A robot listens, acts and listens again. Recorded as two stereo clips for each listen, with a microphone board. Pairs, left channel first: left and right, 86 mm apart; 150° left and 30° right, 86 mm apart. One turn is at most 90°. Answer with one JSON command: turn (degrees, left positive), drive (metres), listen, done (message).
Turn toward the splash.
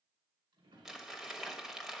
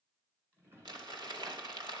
{"listen": true}
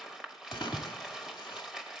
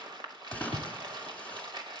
{"turn": 75}
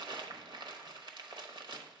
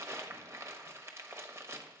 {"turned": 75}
{"done": "Facing where the splash came from. I can't hear it now."}